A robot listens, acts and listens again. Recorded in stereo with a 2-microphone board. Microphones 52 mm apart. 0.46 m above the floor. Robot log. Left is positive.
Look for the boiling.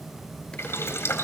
note: The boiling: about 55° left or 125° left.
cmd yaw +55
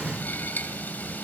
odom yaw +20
note: So it is at 40° left.
cmd yaw +40
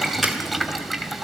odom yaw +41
end: Found it: boiling, straight ahead, 2 to 4 m away.